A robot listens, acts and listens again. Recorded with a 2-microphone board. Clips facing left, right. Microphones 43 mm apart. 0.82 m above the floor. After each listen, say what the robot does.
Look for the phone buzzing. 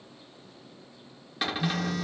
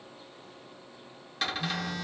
Turn 20° right.
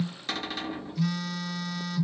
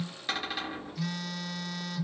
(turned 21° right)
Facing the phone buzzing, 1 to 2 m away.